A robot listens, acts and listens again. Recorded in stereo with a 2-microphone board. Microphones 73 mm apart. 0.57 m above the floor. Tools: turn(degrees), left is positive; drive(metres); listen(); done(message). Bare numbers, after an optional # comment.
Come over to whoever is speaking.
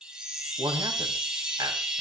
# The man speaking: about 70° right or 110° right.
turn(-70)
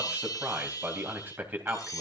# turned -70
# So it is at 30° right.
turn(-30)
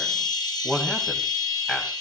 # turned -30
# The man speaking is now 10° left.
turn(10)
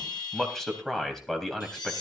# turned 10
drive(1.0)
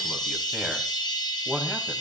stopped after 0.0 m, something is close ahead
done("Something is in my way. I am facing the man speaking but have not reached it.")